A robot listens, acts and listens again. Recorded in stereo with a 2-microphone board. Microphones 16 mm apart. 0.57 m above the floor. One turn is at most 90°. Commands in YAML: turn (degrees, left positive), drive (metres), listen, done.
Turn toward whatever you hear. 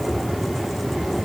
listen: true
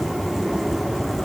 listen: true
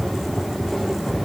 done: "I can't make out anything to turn to."